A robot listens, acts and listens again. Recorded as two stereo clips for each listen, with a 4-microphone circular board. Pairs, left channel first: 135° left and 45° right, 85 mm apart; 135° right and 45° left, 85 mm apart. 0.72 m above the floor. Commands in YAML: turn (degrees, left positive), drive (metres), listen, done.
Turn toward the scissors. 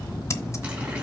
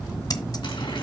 turn: -175
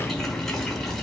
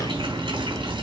listen: true
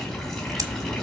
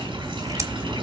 listen: true
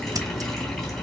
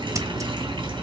done: "Facing where the scissors came from. I can't hear it now."